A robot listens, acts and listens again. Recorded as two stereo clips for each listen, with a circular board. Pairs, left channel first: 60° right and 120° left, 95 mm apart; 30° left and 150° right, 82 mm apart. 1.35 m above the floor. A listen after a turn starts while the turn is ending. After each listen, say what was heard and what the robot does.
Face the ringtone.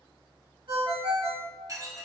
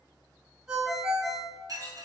The ringtone: 125° left. Turn 125° left.
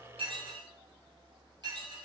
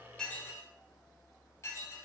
Keep listening.
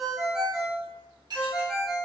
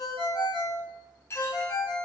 The ringtone is now 35° left. Turn 35° left.
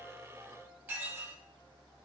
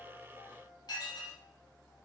Keep listening.
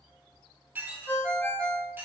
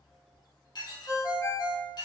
Found it: a ringtone, straight ahead, 1 to 2 m away.